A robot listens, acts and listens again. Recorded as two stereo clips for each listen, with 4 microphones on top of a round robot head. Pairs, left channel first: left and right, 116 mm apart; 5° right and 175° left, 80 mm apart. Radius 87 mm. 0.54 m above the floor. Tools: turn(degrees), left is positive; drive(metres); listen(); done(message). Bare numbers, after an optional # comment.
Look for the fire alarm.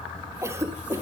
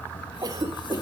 listen()
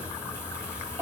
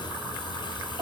listen()
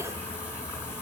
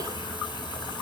done("I can't make out a fire alarm, only a cough.")